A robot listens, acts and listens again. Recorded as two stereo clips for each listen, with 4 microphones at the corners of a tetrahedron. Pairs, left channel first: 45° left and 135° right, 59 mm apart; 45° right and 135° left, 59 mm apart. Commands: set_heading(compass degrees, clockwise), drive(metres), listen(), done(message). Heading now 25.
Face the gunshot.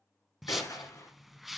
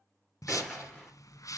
set_heading(0)
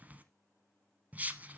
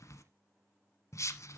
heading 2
done("Facing where the gunshot came from. I can't hear it now.")